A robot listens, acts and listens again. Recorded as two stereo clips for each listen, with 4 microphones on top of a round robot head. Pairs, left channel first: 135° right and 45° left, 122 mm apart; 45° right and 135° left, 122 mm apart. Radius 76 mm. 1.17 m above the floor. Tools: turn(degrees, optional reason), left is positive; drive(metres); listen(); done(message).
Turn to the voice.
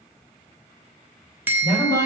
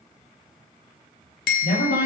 turn(degrees=-70, reason="The woman speaking: 70° right.")
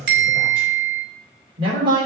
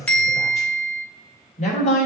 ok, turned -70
turn(degrees=-10, reason="The woman speaking is now 10° right.")
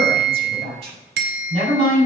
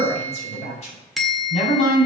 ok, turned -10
done("Found it: a woman speaking, straight ahead, over 4 m away.")